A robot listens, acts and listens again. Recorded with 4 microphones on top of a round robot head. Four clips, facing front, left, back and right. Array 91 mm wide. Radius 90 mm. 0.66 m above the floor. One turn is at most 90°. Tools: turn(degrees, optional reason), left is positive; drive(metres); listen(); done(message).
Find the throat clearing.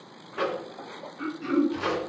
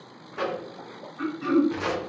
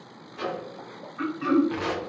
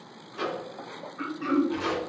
turn(degrees=-90, reason="The throat clearing: 170° right.")
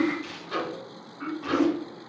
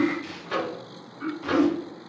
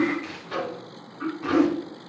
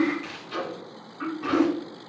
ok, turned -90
turn(degrees=-90, reason="The throat clearing is now 105° right.")
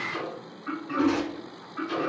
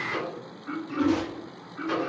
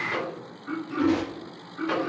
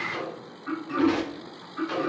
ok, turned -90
turn(degrees=-35, reason="The throat clearing is now 35° right.")
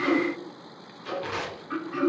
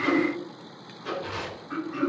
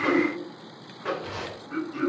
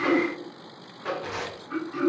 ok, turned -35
turn(degrees=15, reason="The throat clearing is now 15° left.")
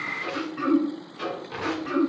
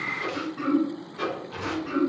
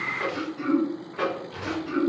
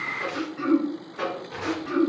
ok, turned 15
done("Found it: throat clearing, straight ahead, 2 to 4 m away.")